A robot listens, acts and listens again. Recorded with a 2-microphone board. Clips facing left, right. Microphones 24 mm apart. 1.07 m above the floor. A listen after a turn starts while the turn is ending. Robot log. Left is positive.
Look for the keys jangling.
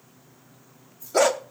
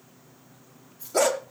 cmd yaw -90
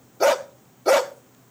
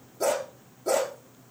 cmd idle
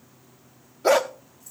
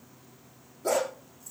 cmd idle
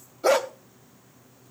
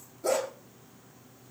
end: Facing where the keys jangling came from. I can't hear it now.